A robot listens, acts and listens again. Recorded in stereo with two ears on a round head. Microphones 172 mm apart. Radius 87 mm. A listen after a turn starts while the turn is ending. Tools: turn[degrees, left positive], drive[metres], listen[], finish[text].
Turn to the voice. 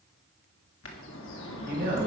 Thought: The man speaking: about 45° right or 135° right.
Action: turn[-45]
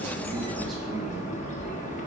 Action: listen[]
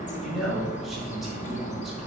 Action: finish[Found it: a man speaking, straight ahead, 2 to 4 m away.]